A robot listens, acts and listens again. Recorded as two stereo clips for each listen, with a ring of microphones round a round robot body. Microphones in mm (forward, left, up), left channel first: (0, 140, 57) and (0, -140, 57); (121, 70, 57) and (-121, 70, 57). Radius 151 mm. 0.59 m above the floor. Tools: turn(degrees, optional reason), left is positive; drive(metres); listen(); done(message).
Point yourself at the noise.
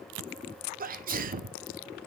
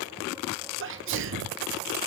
turn(degrees=-145, reason="The sneeze: 145° right.")
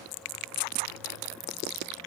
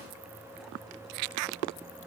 done("I heard a sneeze from this way, but can't make it out now.")